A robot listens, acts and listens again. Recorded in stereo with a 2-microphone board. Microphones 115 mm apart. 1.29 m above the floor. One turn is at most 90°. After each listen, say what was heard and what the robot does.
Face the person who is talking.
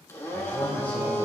Turn 30° left.
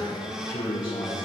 So it is at 135° left. Turn 90° left.
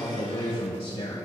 The man speaking is now 50° left. Turn 50° left.
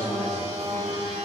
The man speaking is now 20° left. Turn 20° left.
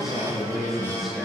Facing the man speaking.